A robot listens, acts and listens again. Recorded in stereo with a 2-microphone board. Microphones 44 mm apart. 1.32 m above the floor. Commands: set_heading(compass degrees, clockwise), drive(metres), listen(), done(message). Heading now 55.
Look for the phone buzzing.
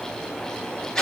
listen()
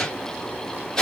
listen()
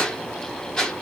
done("I can't make out a phone buzzing to turn to.")